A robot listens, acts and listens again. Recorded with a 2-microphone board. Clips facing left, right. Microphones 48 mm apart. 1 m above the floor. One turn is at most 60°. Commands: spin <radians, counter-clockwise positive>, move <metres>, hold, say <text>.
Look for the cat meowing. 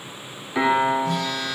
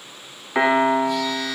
hold
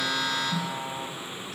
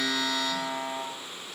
hold
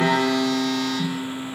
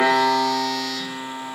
say I can't make out a cat meowing to turn to.